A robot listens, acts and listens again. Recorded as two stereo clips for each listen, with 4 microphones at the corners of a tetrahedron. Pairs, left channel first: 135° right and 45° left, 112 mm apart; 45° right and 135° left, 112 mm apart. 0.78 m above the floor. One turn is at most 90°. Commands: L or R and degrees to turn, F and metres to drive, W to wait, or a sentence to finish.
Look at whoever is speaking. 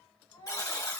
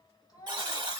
R90
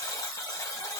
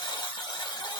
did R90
R10
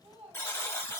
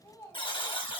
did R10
L20
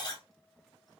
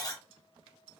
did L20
W
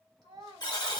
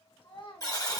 Found it: a child speaking, straight ahead, 2 to 4 m away.